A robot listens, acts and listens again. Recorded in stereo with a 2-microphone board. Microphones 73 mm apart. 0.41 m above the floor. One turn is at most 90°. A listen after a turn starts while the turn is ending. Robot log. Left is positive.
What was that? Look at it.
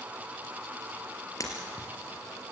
note: The breaking glass: about 50° left or 130° left.
cmd yaw +50
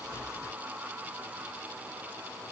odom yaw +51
cmd idle
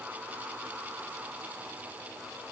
end: I heard breaking glass, but can't make it out now. It was about 5° right or 80° left.